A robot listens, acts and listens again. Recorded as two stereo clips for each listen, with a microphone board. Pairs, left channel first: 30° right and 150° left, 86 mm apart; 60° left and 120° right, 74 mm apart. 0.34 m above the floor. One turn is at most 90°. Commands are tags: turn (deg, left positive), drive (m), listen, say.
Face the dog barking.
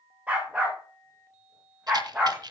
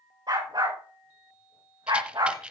<turn deg="-90"/>
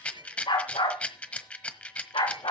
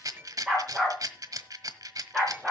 <turn deg="-35"/>
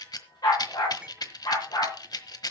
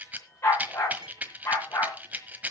<turn deg="10"/>
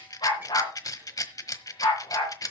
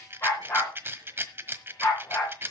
<say>Found it: a dog barking, straight ahead.</say>